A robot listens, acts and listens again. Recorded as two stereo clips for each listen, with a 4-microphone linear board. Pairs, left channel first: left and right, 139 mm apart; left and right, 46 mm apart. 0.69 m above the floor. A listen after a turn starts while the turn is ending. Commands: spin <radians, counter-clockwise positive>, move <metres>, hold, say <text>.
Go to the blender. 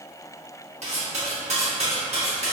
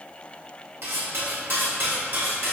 hold
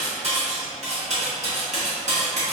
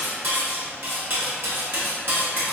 hold
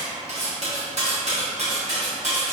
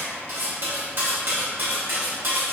say I can't make out a blender to turn to.